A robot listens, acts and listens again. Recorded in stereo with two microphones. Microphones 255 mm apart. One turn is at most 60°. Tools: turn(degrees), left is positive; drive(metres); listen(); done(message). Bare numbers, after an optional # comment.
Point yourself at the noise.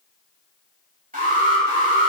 # The alarm: about 30° right or 150° right.
turn(-30)
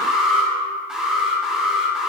done("Found it: an alarm, straight ahead.")